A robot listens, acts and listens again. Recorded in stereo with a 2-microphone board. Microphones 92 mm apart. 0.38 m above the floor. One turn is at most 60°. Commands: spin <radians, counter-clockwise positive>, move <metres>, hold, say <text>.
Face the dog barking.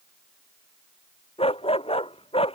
spin 1.05
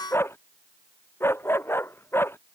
spin 0.44
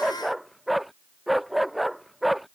say Found it: a dog barking, straight ahead.